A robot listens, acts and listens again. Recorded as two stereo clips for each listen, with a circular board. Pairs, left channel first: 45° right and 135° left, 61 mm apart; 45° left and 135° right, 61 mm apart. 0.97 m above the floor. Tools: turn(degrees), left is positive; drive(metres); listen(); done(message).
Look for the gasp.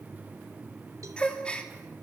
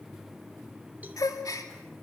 turn(degrees=30)
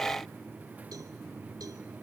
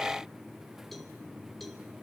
done("Facing where the gasp came from. I can't hear it now.")